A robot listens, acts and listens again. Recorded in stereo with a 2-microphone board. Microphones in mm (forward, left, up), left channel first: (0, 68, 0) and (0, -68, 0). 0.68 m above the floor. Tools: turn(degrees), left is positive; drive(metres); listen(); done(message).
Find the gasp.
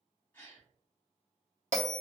turn(degrees=30)
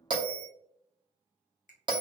listen()
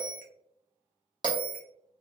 done("I heard a gasp, but can't make it out now. It was about 20° right or 140° left.")